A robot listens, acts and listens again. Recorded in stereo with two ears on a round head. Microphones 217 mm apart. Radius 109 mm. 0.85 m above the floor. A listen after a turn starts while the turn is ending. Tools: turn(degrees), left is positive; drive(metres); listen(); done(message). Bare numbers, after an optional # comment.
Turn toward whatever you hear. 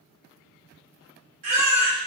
# The baby crying: about 50° right or 130° right.
turn(-50)
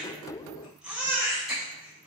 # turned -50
done("Facing the baby crying, 1 to 2 m away.")